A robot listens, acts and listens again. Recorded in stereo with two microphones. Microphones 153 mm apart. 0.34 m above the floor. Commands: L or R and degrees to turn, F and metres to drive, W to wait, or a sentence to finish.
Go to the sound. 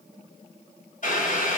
L55
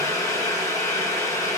L25
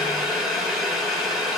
F1.0
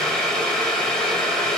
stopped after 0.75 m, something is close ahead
L10
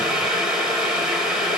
I am next to the boiling.